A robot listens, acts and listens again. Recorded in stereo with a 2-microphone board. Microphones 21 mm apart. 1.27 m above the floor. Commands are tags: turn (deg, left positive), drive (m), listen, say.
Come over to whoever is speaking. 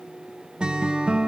<listen/>
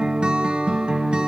<listen/>
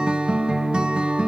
<say>I can't make out anyone speaking to turn to.</say>